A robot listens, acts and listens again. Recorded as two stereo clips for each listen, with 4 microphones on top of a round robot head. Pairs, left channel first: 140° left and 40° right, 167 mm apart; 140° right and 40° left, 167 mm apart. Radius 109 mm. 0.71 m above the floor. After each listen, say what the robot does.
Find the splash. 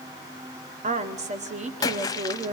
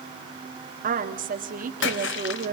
Turn 150° right.
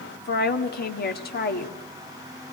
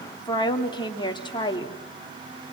Facing where the splash came from. I can't hear it now.